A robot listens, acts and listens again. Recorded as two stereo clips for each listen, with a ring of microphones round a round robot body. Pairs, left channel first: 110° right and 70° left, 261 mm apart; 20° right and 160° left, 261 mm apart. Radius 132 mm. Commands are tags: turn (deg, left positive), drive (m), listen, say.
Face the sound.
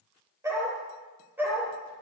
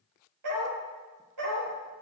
<turn deg="150"/>
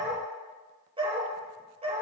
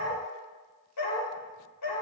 <say>Found it: a dog barking, straight ahead.</say>